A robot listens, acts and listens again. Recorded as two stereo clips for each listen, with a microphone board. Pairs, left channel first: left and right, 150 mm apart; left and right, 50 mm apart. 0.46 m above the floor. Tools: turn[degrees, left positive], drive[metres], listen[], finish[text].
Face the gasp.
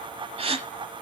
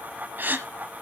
Thought: The gasp: about 45° right or 135° right.
Action: turn[-45]
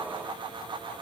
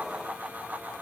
Action: listen[]
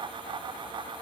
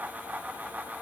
Action: finish[I heard a gasp, but can't make it out now. It was about straight ahead or 90° right.]